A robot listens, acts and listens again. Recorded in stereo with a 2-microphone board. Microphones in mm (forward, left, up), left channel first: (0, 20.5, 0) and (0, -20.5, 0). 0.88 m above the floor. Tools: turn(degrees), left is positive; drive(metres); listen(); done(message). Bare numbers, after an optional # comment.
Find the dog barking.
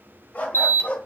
# The dog barking: about 30° left or 150° left.
turn(30)
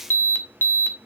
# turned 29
listen()
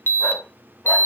listen()
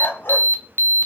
# So it is at 125° left.
turn(125)
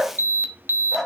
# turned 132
done("Facing the dog barking, 2 to 4 m away.")